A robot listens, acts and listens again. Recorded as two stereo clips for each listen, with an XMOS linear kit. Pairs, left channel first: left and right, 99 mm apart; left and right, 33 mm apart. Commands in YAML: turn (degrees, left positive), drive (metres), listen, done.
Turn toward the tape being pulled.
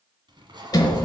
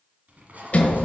turn: -50
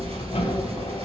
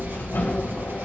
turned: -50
listen: true
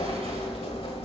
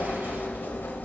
listen: true
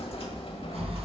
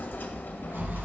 done: "I heard tape being pulled, but can't make it out now. It was about straight ahead or 80° right."